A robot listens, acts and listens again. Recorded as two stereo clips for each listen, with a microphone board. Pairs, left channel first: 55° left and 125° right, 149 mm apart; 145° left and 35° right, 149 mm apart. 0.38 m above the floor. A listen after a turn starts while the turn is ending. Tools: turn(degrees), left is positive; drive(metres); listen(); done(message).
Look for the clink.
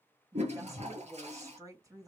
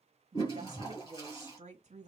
listen()
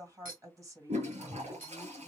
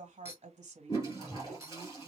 turn(degrees=-110)
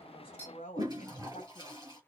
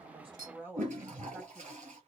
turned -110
listen()
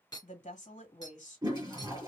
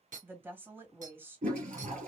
turn(degrees=-10)
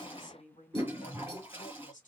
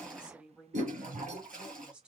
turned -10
listen()
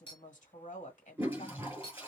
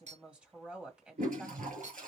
done("Facing the clink, 2 to 4 m away.")